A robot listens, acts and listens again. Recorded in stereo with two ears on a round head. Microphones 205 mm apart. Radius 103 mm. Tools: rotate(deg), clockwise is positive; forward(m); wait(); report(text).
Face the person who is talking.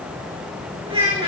rotate(25)
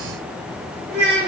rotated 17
rotate(140)
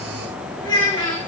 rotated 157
rotate(-20)
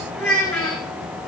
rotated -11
report("Facing the child speaking, 2 to 4 m away.")